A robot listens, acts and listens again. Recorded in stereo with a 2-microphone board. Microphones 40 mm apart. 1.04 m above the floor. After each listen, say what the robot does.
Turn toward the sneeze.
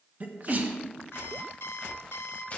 Turn 45° right.
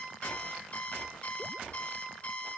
Keep listening.
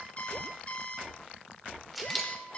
I heard a sneeze, but can't make it out now. It was about straight ahead or 90° right.